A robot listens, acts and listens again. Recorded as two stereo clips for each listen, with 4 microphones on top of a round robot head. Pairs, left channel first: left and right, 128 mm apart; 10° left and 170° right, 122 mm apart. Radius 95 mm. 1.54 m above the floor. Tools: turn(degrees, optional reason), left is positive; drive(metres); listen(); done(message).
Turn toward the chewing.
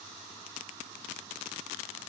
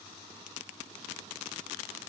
listen()
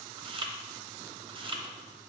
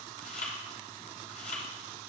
turn(degrees=-40, reason="The chewing: 40° right.")
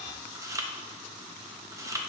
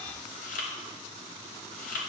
turn(degrees=-25, reason="The chewing is now 25° right.")
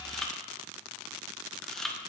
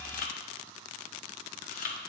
done("Facing the chewing, 1 to 2 m away.")